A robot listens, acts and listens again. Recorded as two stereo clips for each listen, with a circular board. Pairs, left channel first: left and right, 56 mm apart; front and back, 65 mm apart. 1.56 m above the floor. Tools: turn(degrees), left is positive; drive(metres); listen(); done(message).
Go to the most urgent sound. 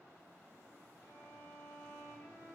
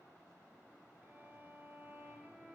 listen()
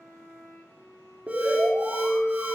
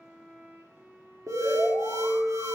turn(degrees=-160)
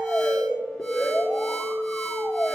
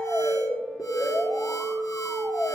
turn(degrees=10)
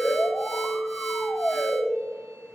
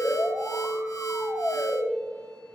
drive(metres=1.0)
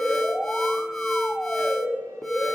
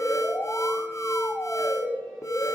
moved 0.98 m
drive(metres=1.0)
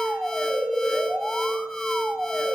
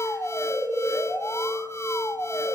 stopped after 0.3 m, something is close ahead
done("Arrived at the alarm, straight ahead.")